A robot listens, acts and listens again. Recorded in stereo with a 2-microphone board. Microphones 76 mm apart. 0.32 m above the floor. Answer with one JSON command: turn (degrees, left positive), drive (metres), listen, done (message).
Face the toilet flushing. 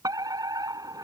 {"listen": true}
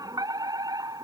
{"listen": true}
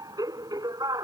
{"done": "I can't make out a toilet flushing, only a fire alarm."}